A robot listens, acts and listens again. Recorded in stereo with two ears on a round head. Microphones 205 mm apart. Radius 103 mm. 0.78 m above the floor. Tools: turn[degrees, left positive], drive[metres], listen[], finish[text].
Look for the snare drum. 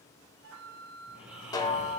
Thought: The snare drum: about 20° left or 160° left.
Action: turn[20]
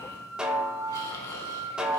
Action: finish[Facing the snare drum, 1 to 2 m away.]